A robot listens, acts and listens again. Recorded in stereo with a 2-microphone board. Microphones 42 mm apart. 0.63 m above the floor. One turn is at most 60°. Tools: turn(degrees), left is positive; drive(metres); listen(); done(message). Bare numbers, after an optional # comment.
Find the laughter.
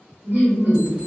# The laughter: about 65° right or 115° right.
turn(-60)
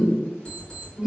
# So it is at 15° right.
turn(-15)
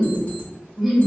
done("Found it: laughter, straight ahead, 1 to 2 m away.")